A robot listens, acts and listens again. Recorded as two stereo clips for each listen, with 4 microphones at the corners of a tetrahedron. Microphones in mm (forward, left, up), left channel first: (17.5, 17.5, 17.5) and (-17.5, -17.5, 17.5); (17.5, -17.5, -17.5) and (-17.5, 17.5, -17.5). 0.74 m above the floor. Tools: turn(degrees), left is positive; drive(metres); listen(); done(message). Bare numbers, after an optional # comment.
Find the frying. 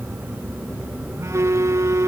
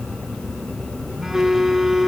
listen()
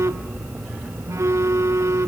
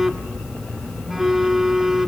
listen()
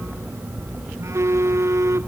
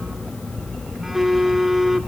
done("I can't make out frying, only a phone buzzing.")